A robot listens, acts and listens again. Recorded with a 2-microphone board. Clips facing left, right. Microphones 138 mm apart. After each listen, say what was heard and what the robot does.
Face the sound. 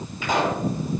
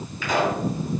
The pop: about 25° left or 155° left. Turn 25° left.
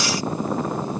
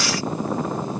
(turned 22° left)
Keep listening.
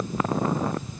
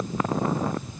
I heard a pop, but can't make it out now. It was about straight ahead or 135° left.